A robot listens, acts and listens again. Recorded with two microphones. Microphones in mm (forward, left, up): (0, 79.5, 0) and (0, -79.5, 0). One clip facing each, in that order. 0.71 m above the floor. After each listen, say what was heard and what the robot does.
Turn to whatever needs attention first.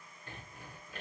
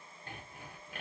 Keep listening.
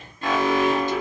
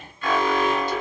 The alarm: about 40° left or 140° left. Turn 40° left.
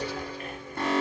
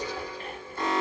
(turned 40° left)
So it is at 95° left. Turn 95° left.
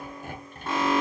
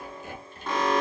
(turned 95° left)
Facing the alarm, 1 to 2 m away.